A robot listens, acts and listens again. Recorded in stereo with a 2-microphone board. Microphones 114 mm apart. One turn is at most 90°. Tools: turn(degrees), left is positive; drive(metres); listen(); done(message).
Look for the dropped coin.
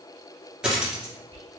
turn(degrees=-30)
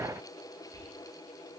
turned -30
listen()
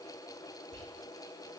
done("I heard a dropped coin, but can't make it out now. It was about 25° left or 145° right.")